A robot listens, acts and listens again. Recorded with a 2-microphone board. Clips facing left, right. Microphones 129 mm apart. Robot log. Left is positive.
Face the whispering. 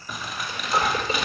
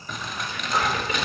note: The whispering: about 30° left or 150° left.
cmd yaw +30
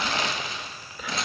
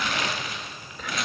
end: Facing the whispering, 2 to 4 m away.